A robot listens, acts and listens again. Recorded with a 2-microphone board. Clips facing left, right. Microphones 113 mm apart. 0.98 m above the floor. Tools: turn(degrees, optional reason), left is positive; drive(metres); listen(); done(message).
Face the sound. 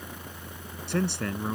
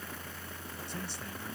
turn(degrees=70, reason="The man speaking: about 70° left or 110° left.")
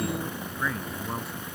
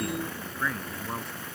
done("Facing the man speaking.")